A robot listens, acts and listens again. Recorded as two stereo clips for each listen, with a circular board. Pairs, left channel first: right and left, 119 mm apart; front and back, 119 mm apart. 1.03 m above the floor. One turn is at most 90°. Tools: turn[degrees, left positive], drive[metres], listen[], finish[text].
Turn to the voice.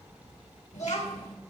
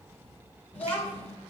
Thought: The child speaking: 75° right.
Action: turn[-75]
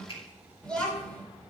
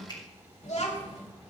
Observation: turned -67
Thought: The child speaking is now 10° right.
Action: turn[-10]
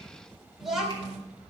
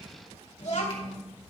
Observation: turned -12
Action: finish[Found it: a child speaking, straight ahead.]